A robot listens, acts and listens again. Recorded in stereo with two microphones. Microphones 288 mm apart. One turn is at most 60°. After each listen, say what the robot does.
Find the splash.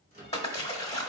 Turn 20° left.
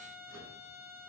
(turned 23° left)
Keep listening.
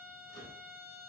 I heard a splash, but can't make it out now. It was about straight ahead or 135° left.